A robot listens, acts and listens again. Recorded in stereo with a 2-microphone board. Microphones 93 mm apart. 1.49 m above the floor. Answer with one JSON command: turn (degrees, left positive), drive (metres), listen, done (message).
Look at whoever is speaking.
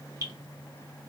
{"listen": true}
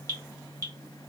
{"listen": true}
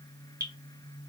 {"done": "I can't make out anyone speaking, only dripping."}